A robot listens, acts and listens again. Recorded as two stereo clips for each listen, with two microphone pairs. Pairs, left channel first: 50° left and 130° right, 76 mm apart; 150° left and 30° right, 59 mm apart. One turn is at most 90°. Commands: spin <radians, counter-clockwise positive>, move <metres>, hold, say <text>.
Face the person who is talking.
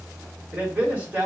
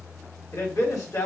spin 1.57
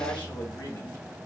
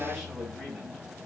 spin 1.31
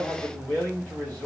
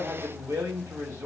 spin -0.35
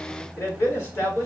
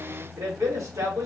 say Facing the man speaking, 1 to 2 m away.